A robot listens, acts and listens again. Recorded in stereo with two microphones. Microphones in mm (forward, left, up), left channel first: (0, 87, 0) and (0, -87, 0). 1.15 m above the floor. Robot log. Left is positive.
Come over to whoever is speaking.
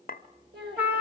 note: The child speaking: about 70° right or 110° right.
cmd yaw -70
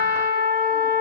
cmd idle
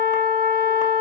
cmd idle
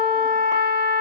end: I heard a child speaking, but can't make it out now. It was about straight ahead or 40° right. I did not reach it.